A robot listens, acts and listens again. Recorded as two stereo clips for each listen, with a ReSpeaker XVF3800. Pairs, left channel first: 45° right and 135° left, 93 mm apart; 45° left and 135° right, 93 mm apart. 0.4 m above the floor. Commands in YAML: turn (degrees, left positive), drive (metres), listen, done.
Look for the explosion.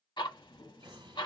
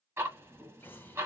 turn: 110
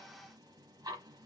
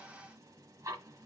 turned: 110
done: "I heard an explosion from this way, but can't make it out now."